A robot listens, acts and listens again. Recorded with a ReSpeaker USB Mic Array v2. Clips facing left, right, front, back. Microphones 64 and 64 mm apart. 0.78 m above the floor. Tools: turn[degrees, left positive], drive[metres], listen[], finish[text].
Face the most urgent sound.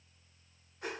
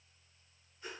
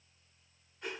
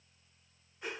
Action: listen[]
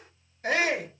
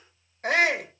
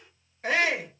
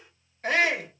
Thought: The shout: 85° right.
Action: turn[-85]
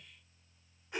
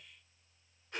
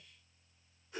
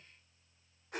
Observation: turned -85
Action: listen[]
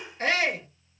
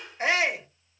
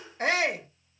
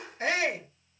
Thought: The shout is now 15° right.
Action: turn[-15]
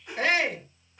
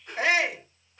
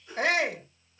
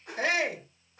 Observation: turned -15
Action: finish[Facing the shout.]